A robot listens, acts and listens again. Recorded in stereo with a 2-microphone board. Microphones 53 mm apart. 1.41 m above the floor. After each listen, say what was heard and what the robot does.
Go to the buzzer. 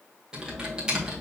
Keep listening.
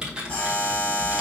The buzzer: about 30° left or 150° left. Turn 30° left.
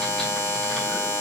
So it is at 125° left. Turn 125° left.
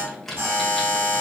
The buzzer is now 40° right. Turn 40° right.
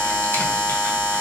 The buzzer is now 10° left. Turn 10° left.
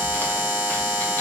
Drive 1.0 m forward.
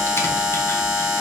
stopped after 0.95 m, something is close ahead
I am next to the buzzer.